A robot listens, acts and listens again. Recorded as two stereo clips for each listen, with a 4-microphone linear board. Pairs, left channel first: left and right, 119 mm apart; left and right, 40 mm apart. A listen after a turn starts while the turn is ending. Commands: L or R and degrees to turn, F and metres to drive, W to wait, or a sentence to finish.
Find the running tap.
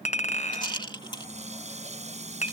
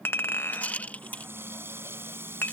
R70
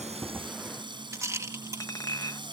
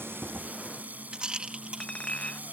R40
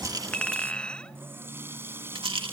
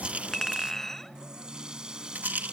R20
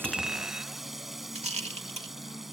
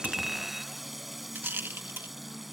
Found it: a running tap, straight ahead.